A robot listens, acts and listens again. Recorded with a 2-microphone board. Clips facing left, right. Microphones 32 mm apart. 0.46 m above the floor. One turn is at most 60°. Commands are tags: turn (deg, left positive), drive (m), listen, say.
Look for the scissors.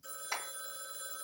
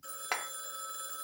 <listen/>
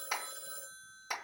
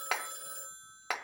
<listen/>
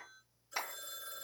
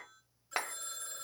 <say>I can't make out scissors to turn to.</say>